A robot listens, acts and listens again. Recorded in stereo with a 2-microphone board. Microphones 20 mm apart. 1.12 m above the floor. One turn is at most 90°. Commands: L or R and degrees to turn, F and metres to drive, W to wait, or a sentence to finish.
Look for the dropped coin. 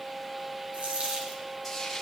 R90
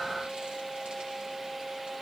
I heard a dropped coin from this way, but can't make it out now.